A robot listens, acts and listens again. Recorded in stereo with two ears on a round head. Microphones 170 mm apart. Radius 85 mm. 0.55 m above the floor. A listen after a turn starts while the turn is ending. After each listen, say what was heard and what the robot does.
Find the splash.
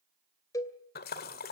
The splash: about 50° left or 130° left. Turn 50° left.
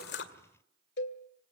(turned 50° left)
Keep listening.
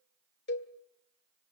I heard a splash, but can't make it out now. It was about straight ahead or 80° left.